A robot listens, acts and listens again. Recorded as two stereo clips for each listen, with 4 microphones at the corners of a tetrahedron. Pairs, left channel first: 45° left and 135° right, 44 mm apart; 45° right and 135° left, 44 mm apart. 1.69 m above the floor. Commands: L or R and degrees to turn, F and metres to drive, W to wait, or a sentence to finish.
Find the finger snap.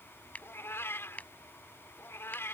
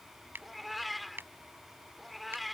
L100
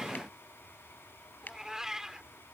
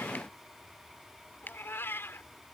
Facing the finger snap.